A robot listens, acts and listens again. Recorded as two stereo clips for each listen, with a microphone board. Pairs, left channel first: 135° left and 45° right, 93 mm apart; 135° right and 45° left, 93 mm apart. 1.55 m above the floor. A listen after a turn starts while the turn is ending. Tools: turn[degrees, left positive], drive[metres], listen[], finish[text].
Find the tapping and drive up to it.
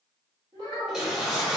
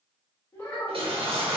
Action: listen[]
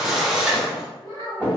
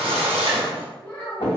Thought: The tapping: 110° right.
Action: turn[-110]
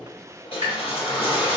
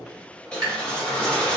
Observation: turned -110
Action: drive[1.0]
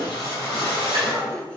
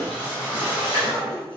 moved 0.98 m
Action: listen[]
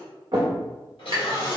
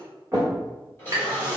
Thought: The tapping is now 10° right.
Action: turn[-10]
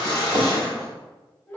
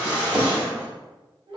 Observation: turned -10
Action: drive[1.0]
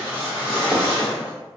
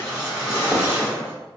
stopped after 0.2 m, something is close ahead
Action: listen[]
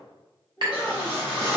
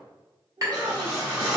Thought: The tapping is now 10° right.
Action: turn[-10]
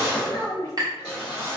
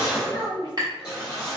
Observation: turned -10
Action: finish[Arrived at the tapping, straight ahead.]